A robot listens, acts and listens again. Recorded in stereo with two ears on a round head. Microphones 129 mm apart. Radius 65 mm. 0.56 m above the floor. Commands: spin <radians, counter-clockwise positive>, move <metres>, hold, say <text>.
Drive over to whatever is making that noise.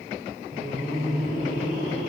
spin -1.13
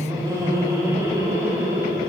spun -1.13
spin -0.44
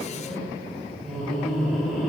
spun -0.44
move 1.0
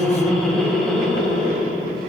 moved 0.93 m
move 1.0
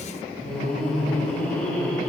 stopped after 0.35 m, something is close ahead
spin 0.17
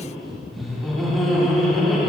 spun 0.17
say I am next to the laughter.